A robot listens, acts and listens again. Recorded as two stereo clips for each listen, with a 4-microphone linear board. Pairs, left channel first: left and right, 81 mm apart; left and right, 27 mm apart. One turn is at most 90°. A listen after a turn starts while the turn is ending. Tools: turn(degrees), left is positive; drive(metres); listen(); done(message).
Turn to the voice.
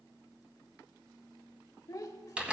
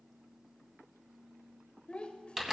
turn(degrees=45)
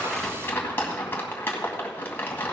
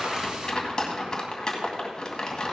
listen()
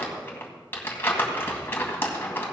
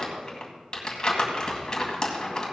listen()
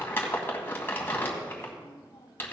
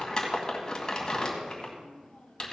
done("I heard a child speaking, but can't make it out now. It was about straight ahead or 90° left.")